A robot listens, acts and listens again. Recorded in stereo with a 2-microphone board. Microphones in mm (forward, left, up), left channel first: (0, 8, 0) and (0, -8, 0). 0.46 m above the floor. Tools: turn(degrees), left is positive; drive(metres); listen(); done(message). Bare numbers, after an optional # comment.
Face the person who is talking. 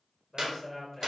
turn(30)
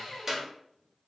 listen()
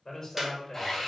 # So it is at 145° left.
turn(145)
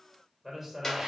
# The man speaking is now 15° right.
turn(-15)
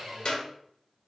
listen()
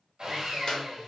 listen()
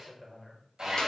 done("Found it: a man speaking, straight ahead.")